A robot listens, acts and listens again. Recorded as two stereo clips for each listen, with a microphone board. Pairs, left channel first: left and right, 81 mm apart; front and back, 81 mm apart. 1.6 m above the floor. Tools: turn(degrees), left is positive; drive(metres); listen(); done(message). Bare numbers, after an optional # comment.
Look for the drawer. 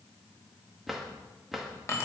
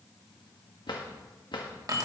done("Found it: a drawer, straight ahead.")